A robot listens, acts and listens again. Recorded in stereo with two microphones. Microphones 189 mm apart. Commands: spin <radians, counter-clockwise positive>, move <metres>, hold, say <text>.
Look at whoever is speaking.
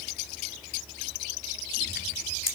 hold
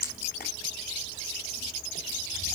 hold
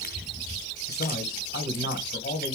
spin 0.96
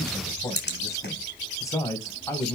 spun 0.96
spin 0.35
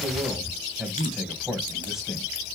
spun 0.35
say Facing the man speaking, 2 to 4 m away.